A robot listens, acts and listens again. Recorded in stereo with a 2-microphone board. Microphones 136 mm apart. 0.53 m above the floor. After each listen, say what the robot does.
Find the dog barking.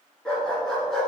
Turn 30° left.
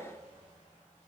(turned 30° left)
Keep listening.
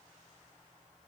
Keep listening.
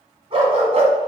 Turn 50° right.
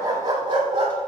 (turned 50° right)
Turn 40° right.
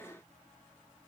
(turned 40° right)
Keep listening.
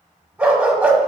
Found it: a dog barking, straight ahead, 1 to 2 m away.